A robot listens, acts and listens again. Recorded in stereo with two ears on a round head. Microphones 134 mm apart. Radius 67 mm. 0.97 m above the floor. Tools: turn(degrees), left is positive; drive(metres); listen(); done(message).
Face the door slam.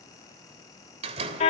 turn(degrees=-40)
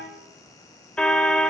listen()
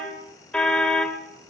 done("I heard a door slam, but can't make it out now. It was about straight ahead or 100° right.")